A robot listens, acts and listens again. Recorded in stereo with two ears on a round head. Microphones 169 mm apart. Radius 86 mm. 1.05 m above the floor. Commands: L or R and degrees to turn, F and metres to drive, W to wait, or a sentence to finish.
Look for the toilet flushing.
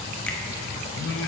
W
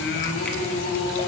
W
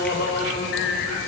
I can't make out a toilet flushing to turn to.